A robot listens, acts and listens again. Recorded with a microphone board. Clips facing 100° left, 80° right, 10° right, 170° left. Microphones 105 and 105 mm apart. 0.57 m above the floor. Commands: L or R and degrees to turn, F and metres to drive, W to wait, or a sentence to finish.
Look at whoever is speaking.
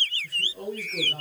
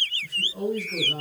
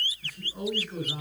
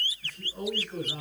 R90
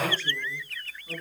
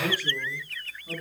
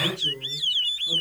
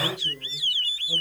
W
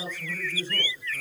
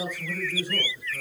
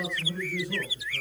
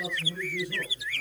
Found it: a man speaking, straight ahead, over 4 m away.